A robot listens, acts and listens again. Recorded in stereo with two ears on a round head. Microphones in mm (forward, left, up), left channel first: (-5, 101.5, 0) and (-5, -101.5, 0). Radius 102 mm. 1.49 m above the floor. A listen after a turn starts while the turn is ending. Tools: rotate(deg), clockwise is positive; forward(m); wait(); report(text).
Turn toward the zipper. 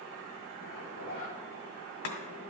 rotate(-60)
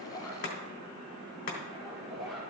report("Facing the zipper.")